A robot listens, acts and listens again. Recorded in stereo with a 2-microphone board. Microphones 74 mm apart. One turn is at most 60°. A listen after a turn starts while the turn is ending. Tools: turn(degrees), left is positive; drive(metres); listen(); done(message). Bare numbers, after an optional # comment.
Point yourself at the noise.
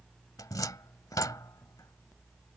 # The cupboard door: about 55° left or 125° left.
turn(55)
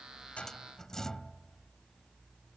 # So it is at 10° left.
turn(10)
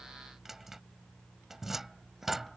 done("Found it: a cupboard door, straight ahead.")